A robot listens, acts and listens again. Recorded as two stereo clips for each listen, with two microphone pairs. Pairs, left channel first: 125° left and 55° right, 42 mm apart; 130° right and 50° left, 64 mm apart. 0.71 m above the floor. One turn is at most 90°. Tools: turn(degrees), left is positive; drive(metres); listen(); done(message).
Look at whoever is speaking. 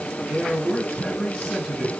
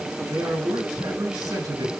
turn(degrees=50)
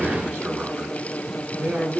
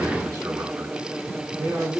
done("Facing the man speaking, over 4 m away.")